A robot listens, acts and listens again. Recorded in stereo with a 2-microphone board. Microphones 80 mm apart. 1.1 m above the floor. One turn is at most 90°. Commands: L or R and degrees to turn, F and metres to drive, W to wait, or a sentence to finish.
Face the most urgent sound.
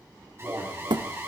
R35
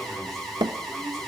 Facing the alarm, over 4 m away.